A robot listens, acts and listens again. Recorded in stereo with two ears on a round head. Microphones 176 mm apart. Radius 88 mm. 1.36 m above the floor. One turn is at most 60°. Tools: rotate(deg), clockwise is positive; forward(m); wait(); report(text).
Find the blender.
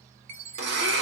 rotate(60)
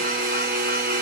rotate(50)
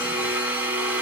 rotate(10)
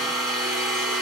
report("Found it: a blender, straight ahead, 1 to 2 m away.")